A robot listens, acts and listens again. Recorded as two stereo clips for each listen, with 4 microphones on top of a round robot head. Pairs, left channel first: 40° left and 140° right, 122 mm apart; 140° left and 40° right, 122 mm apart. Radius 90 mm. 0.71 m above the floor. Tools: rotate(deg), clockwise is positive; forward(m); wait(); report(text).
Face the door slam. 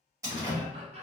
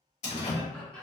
rotate(-160)
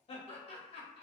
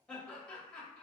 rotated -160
report("I heard a door slam from this way, but can't make it out now.")